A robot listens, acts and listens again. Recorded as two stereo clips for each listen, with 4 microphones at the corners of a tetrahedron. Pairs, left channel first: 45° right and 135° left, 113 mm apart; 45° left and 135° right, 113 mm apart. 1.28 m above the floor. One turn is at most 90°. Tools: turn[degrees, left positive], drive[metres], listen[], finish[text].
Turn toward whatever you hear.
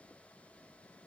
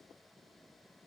Action: listen[]
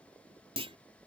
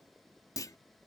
Thought: The clunk: 100° left.
Action: turn[90]
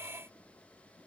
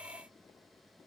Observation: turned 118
Thought: Nothing new. It was at 15° right.
Action: turn[-15]
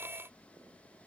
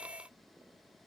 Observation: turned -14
Action: finish[I heard a clunk from this way, but can't make it out now.]